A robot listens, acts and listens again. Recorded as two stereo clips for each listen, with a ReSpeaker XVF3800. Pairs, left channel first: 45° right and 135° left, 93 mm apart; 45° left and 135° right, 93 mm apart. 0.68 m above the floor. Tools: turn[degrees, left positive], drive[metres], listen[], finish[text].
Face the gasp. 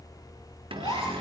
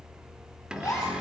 Thought: The gasp: 10° right.
Action: turn[-10]
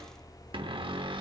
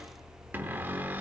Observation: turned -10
Action: finish[Facing where the gasp came from. I can't hear it now.]